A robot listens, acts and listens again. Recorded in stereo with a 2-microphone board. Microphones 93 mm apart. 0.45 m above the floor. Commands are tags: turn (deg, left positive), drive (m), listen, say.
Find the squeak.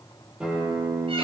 <listen/>
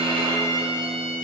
<listen/>
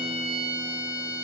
<say>I can't make out a squeak to turn to.</say>